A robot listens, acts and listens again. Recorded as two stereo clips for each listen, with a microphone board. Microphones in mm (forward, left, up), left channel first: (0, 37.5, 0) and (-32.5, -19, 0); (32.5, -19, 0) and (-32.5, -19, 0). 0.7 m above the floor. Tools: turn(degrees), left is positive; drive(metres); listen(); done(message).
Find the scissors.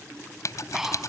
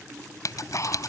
turn(degrees=25)
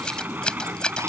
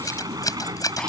turn(degrees=-15)
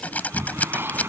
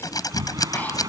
done("Found it: scissors, straight ahead.")